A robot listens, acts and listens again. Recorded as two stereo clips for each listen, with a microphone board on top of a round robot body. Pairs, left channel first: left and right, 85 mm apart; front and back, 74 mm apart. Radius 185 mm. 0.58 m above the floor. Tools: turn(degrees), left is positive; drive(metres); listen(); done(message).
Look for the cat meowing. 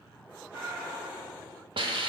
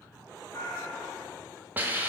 turn(degrees=-25)
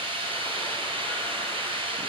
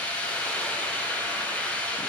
listen()
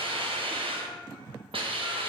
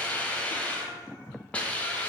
listen()
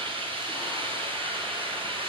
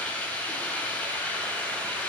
done("Facing where the cat meowing came from. I can't hear it now.")